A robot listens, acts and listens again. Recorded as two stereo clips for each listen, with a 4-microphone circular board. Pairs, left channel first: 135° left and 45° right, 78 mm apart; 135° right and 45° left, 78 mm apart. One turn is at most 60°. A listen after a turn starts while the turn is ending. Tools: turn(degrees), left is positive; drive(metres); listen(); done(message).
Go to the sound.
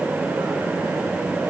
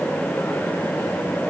listen()
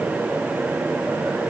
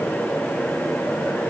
listen()
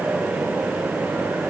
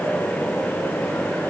done("I can't make out anything.")